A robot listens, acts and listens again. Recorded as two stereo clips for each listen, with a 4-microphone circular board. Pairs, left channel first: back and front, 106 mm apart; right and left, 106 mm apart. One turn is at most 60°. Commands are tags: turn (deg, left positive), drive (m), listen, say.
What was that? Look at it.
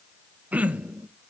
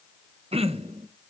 <turn deg="60"/>
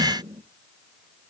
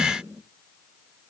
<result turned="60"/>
<turn deg="15"/>
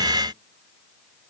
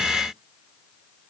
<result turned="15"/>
<listen/>
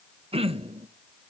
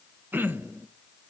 <turn deg="20"/>
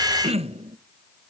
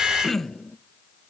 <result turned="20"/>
<say>Found it: throat clearing, straight ahead.</say>